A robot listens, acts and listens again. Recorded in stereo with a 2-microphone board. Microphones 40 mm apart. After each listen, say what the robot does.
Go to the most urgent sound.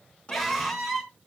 Turn 30° right.
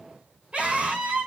Turn 145° right.
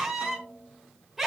Drive 1.0 m forward.
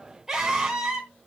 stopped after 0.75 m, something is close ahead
Turn 10° right.
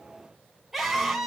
Something is in my way. I am facing the scream but have not reached it.